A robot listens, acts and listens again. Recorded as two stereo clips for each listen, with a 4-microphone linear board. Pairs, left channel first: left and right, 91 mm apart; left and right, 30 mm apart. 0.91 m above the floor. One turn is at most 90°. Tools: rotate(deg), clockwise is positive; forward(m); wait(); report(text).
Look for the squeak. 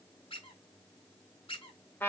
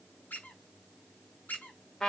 rotate(-90)
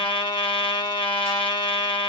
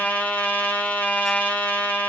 wait()
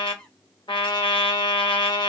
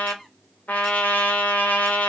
wait()
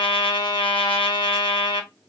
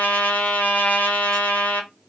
report("I heard a squeak from this way, but can't make it out now.")